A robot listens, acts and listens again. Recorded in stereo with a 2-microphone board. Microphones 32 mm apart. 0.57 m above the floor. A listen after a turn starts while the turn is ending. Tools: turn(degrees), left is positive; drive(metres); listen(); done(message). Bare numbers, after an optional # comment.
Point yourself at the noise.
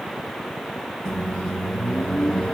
# The microwave: about 20° left or 160° left.
turn(20)
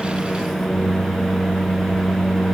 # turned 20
done("Facing the microwave.")